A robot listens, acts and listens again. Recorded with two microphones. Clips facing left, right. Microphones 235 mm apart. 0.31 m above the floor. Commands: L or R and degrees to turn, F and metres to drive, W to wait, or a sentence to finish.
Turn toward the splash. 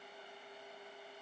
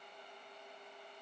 W
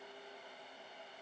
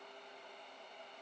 W
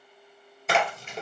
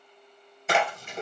L30
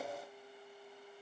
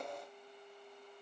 W
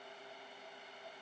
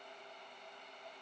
I heard a splash, but can't make it out now. It was about 30° right or 150° left.